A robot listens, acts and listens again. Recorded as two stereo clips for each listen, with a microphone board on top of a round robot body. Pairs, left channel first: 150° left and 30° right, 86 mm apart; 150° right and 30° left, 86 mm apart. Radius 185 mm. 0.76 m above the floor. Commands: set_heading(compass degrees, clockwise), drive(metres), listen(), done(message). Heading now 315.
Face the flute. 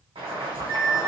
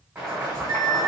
set_heading(130)
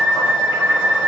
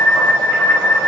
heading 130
set_heading(100)
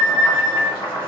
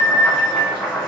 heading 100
done("Found it: a flute, straight ahead.")